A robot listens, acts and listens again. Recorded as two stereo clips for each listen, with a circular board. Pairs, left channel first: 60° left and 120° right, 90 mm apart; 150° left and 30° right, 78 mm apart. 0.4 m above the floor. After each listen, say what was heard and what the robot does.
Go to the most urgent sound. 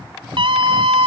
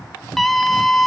The scream: 125° right. Turn 125° right.
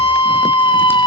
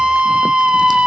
The scream is now 45° left. Turn 45° left.
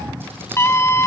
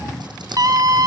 Drive 1.0 m forward.
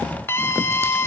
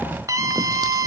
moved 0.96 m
Drive 1.0 m forward.
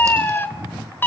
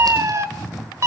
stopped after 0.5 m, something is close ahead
I am next to the scream.